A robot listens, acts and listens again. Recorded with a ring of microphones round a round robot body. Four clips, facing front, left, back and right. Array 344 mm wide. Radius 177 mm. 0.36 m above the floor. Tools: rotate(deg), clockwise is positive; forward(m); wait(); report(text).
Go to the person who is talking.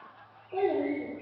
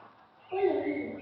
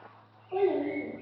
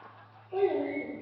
rotate(-135)
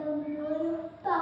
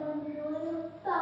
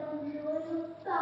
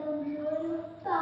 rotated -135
forward(1.0)
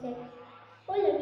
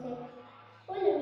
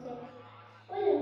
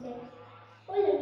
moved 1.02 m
forward(1.0)
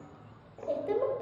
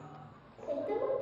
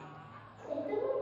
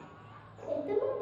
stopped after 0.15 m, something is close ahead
report("I am next to the child speaking.")